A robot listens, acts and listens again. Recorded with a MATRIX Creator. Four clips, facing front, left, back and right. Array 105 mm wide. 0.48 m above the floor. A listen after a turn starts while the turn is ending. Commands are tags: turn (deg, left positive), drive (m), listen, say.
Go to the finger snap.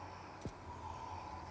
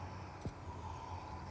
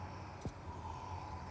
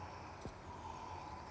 <listen/>
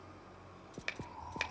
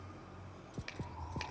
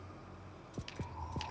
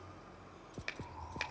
<turn deg="-25"/>
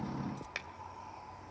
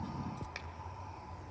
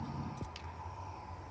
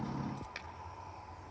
<listen/>
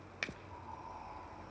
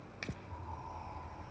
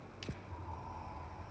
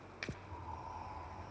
<drive m="1.0"/>
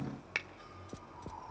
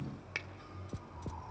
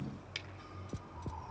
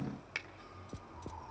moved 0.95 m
<drive m="1.0"/>
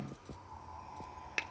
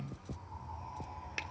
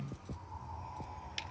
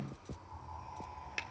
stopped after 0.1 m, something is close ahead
<say>I am next to the finger snap.</say>